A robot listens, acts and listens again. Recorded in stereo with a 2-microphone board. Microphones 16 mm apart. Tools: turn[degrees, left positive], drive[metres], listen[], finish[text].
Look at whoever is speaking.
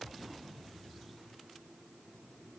Action: listen[]
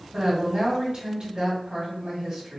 Thought: The woman speaking: about 50° right or 130° right.
Action: turn[-50]
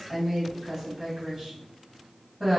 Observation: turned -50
Thought: So it is at 15° right.
Action: turn[-15]
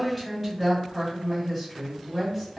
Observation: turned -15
Action: finish[Found it: a woman speaking, straight ahead, 1 to 2 m away.]